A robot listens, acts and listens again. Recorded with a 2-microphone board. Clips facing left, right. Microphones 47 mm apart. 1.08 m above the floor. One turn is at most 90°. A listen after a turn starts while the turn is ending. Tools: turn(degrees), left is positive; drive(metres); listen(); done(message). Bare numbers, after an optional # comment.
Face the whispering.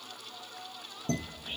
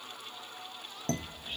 # The whispering: about 25° left or 155° left.
turn(25)
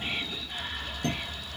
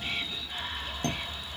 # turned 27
done("Found it: whispering, straight ahead.")